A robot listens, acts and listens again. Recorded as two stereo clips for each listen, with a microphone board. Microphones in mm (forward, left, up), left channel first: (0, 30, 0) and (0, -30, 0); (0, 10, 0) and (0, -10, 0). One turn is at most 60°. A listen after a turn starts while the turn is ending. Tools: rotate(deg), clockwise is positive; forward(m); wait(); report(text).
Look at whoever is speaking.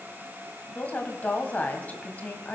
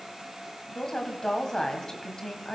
rotate(-30)
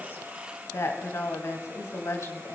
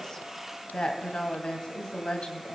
rotate(-60)
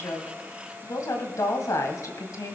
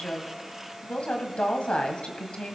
rotate(-60)
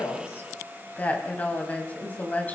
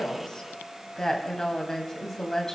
rotate(-30)
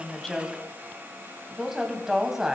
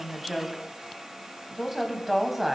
rotate(10)
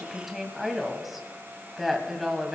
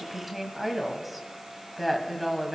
report("Found it: a woman speaking, straight ahead.")